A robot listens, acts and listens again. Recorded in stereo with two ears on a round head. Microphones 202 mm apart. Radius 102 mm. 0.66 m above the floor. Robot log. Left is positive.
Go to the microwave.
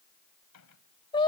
cmd yaw +90
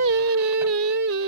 cmd idle
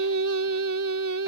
cmd idle
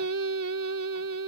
end: I heard a microwave from this way, but can't make it out now. I did not reach it.